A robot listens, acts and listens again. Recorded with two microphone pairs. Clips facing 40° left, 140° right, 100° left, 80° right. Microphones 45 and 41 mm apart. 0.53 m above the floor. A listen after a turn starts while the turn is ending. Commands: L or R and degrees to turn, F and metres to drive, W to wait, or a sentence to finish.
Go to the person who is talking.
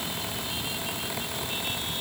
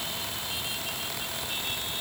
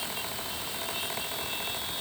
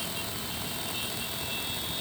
W
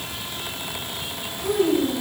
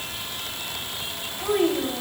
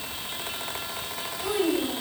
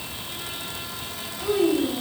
L170
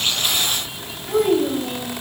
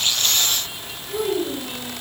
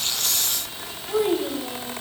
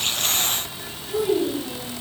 L65
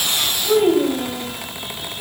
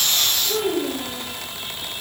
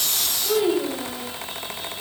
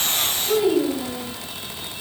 L10
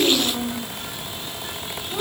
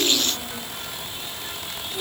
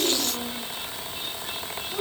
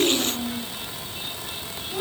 F1.0
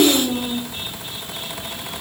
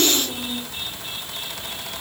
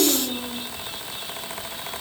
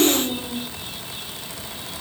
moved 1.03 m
F1.0
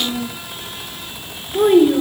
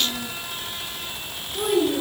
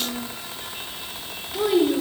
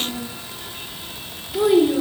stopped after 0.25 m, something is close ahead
I am next to the child speaking.